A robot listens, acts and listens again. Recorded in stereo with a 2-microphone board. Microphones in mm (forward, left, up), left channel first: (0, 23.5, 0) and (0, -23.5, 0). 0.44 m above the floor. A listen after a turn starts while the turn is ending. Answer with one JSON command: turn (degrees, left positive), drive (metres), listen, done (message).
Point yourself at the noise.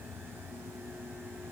{"listen": true}
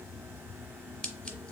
{"turn": 20}
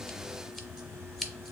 {"done": "Found it: scissors, straight ahead, under 1 m away."}